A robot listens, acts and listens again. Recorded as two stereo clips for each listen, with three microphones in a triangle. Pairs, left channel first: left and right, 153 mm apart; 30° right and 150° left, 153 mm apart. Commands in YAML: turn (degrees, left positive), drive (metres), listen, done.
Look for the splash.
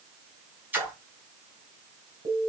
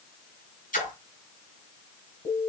turn: -15
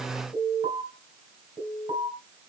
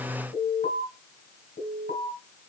done: "I heard a splash from this way, but can't make it out now."